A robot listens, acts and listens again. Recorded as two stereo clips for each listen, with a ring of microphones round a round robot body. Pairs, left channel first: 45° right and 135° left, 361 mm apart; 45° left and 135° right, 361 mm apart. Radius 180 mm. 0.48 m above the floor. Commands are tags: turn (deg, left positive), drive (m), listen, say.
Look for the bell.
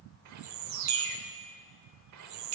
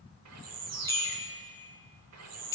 <turn deg="125"/>
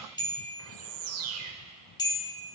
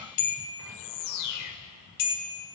<turn deg="35"/>
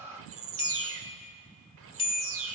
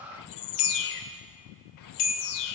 <turn deg="30"/>
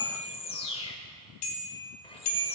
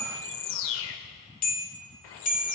<turn deg="-20"/>
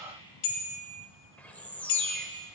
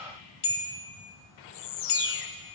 <turn deg="-10"/>
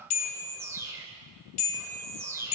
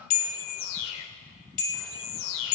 <say>Found it: a bell, straight ahead.</say>